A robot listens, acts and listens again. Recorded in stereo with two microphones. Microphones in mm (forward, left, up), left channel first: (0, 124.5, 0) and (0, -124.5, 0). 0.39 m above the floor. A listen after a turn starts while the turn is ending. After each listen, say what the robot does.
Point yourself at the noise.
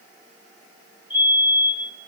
Turn 70° right.
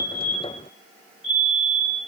Turn 30° right.
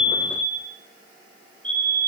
Facing the fire alarm, over 4 m away.